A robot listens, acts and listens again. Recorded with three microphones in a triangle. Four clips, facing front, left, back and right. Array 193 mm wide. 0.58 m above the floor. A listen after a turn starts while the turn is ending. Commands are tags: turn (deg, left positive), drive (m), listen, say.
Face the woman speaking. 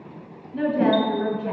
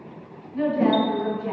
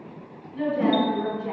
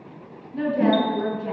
<turn deg="-20"/>
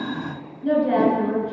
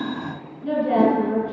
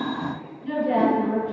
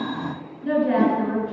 <say>Found it: a woman speaking, straight ahead.</say>